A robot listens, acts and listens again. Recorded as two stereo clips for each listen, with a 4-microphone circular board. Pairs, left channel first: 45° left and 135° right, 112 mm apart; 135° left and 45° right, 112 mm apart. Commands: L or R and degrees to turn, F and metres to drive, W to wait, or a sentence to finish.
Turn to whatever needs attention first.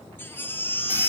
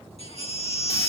L115
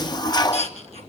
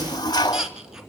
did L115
L40
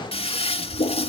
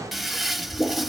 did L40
W
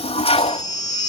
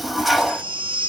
R10
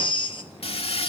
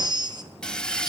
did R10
Found it: a baby crying, straight ahead.